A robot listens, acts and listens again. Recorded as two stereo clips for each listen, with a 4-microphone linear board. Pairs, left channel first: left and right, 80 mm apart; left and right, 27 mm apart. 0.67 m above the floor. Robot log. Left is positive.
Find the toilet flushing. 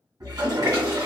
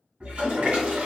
note: The toilet flushing: about 50° right or 130° right.
cmd yaw -50
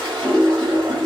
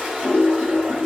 note: So it is at 80° right.
cmd yaw -80
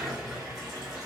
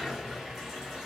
note: The toilet flushing is now 10° right.
cmd yaw -10
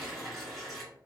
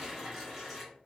end: Facing the toilet flushing, 1 to 2 m away.